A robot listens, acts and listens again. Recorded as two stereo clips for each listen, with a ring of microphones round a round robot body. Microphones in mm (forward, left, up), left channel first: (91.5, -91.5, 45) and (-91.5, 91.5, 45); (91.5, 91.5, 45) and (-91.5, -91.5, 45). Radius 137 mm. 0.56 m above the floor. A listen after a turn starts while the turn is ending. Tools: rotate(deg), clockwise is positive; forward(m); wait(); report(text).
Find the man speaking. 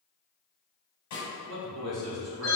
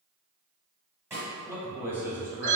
rotate(-145)
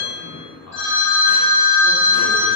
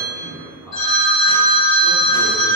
rotate(35)
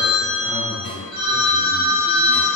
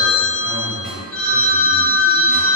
wait()
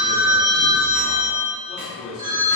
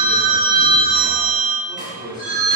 rotate(10)
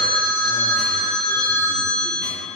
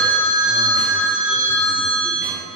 wait()
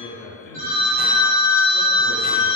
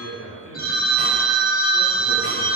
report("Found it: a man speaking, straight ahead.")